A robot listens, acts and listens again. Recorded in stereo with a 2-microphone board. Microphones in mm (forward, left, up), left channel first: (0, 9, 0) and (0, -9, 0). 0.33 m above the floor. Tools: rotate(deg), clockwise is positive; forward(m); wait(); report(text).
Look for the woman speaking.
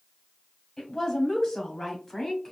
rotate(-20)
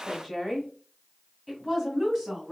rotate(20)
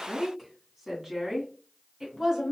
rotate(20)
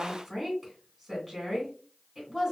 rotate(10)
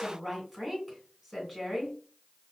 report("Found it: a woman speaking, straight ahead.")